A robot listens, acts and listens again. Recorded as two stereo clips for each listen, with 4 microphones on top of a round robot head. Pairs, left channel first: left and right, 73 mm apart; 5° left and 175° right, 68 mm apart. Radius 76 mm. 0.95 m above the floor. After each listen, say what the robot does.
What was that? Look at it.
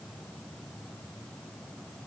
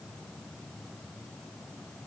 Keep listening.
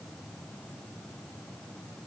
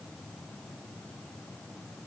Keep listening.
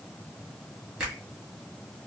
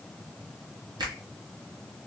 Turn 175° right.
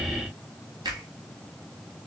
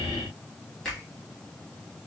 Turn 80° right.
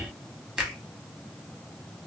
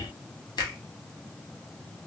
Turn 10° right.
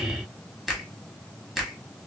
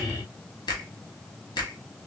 Found it: a finger snap, straight ahead.